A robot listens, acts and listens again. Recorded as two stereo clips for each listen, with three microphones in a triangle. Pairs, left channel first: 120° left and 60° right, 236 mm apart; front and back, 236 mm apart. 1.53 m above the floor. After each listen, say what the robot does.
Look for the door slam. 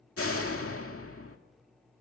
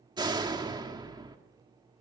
Turn 110° left.
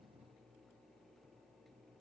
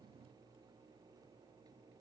Facing where the door slam came from. I can't hear it now.